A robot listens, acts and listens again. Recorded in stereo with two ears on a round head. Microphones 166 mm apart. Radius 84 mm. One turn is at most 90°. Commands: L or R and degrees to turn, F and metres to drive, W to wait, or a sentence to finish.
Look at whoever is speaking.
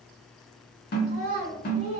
L40
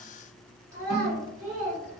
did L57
R15
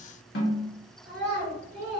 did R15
Found it: a child speaking, straight ahead.